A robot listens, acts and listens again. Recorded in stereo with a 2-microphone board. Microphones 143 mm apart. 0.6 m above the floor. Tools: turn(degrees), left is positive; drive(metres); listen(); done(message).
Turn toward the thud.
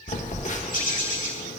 listen()
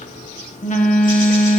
listen()
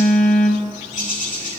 done("I can't make out a thud to turn to.")